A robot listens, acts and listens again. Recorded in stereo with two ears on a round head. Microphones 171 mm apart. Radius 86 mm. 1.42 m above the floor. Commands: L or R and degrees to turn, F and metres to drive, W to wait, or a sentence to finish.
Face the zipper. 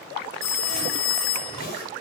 L55
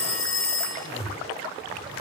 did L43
L85
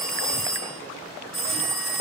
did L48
L35
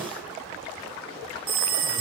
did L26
Found it: a zipper, straight ahead, over 4 m away.